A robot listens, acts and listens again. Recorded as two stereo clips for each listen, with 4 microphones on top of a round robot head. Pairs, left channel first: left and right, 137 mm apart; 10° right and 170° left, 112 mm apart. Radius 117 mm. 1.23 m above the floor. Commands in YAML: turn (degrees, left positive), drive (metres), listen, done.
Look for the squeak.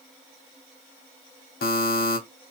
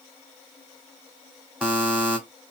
listen: true
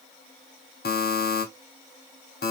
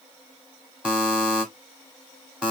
listen: true
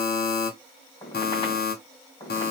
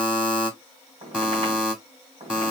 turn: 145
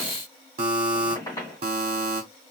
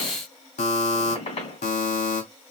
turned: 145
turn: 20
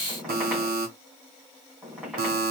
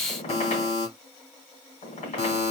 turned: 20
done: "Facing the squeak, 2 to 4 m away."